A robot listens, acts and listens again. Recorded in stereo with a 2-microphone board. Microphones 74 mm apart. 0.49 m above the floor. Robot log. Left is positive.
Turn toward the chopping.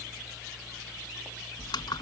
cmd idle
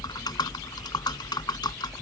cmd idle
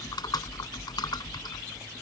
end: I can't make out chopping, only typing on a keyboard.